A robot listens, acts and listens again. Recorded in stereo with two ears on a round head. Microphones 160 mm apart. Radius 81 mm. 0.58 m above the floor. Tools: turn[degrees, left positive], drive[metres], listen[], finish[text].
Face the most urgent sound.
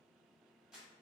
Action: listen[]
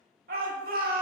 Thought: The shout: about 55° right or 125° right.
Action: turn[-55]
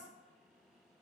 Action: listen[]
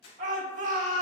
Thought: So it is at 50° right.
Action: turn[-50]
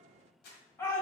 Thought: The shout is now 15° left.
Action: turn[15]
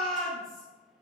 Action: finish[Found it: a shout, straight ahead, 1 to 2 m away.]